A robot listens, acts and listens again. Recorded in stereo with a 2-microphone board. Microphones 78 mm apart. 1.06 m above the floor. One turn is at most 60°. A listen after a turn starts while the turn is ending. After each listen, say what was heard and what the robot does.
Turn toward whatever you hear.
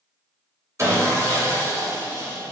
The sawing: about 40° right or 140° right. Turn 40° right.
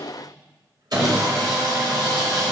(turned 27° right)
So it is at 110° right. Turn 60° right.
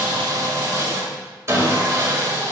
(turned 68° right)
The sawing is now 40° right. Turn 40° right.
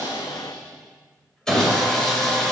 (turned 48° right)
The sawing is now 10° left. Turn 10° left.
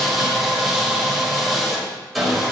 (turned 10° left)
Found it: sawing, straight ahead.